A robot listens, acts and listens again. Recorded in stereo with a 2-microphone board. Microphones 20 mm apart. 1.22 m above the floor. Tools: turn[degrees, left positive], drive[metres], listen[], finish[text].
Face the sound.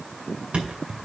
Thought: The thud: about 70° right or 110° right.
Action: turn[-70]
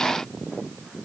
Action: listen[]
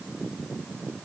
Action: finish[I heard a thud, but can't make it out now. It was about straight ahead or 40° right.]